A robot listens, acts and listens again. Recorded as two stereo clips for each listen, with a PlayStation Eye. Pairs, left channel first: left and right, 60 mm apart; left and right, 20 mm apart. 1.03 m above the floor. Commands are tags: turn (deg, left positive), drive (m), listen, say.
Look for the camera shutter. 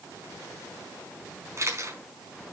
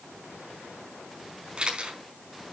<turn deg="-50"/>
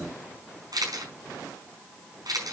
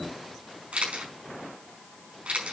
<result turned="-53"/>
<turn deg="-80"/>
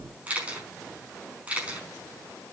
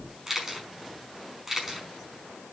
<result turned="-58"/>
<turn deg="-20"/>
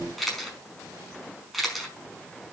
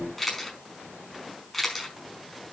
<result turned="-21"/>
<say>Facing the camera shutter.</say>